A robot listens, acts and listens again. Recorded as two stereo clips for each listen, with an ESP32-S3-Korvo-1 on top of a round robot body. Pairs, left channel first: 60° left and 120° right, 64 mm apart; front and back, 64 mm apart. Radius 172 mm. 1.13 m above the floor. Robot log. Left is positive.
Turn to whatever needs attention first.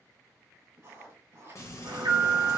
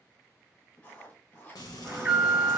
note: The alarm: 105° right.
cmd yaw -105
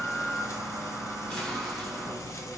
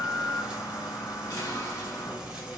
note: The alarm is now 20° right.
cmd yaw -20
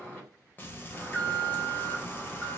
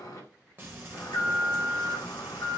end: Found it: an alarm, straight ahead, 1 to 2 m away.